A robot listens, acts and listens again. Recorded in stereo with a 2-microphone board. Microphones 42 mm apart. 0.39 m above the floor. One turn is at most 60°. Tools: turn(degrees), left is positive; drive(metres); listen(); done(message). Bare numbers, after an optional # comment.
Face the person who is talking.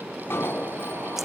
listen()
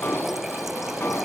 listen()
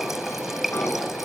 done("I can't make out anyone speaking, only an alarm and a running tap.")